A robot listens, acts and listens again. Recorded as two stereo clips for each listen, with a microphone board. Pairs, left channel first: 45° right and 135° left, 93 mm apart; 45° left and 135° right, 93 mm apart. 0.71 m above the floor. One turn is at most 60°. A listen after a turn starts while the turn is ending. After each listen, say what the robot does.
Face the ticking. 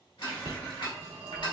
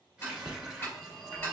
Turn 15° right.
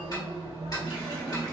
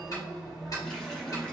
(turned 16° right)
Found it: ticking, straight ahead.